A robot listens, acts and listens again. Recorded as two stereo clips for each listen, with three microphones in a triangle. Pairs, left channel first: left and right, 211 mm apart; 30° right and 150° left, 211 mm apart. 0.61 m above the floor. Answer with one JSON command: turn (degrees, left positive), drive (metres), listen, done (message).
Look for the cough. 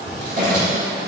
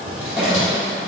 {"turn": -125}
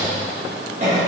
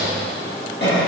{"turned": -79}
{"turn": -40}
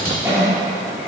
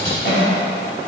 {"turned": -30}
{"turn": -15}
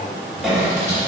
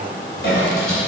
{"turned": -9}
{"done": "Facing the cough, 1 to 2 m away."}